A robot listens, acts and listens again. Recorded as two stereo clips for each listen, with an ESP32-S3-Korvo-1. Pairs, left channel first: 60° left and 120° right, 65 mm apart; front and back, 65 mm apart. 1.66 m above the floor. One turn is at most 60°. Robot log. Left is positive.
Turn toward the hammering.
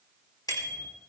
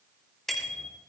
cmd idle
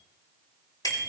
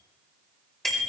cmd idle
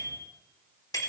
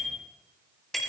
end: I can't make out hammering to turn to.